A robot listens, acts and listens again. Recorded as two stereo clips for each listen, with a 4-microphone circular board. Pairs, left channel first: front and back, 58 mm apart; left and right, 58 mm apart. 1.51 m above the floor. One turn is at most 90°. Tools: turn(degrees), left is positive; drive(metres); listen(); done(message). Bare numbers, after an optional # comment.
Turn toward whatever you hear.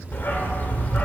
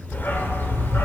# The dog barking: 55° left.
turn(55)
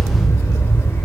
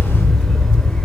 # The dog barking is now 15° left.
turn(15)
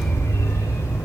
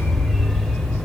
done("Facing the dog barking.")